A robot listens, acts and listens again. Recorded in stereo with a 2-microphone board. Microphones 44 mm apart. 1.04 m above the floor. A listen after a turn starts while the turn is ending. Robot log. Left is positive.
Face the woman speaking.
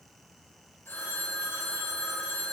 cmd idle
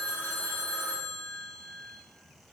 cmd idle
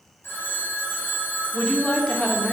note: The woman speaking: about 25° left or 155° left.
cmd yaw +25
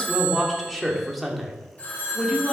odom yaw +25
end: Found it: a woman speaking, straight ahead.